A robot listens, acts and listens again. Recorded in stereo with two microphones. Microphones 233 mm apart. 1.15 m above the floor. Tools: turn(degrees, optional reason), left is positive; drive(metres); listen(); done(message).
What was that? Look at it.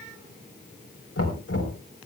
turn(degrees=90)
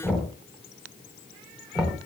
done("Facing the knocking, 2 to 4 m away.")